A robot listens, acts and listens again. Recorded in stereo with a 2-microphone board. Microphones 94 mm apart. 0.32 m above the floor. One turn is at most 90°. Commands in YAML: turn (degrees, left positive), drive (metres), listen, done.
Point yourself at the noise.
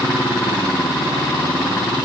listen: true
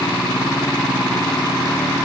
listen: true
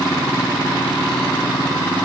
done: "I can't make out anything."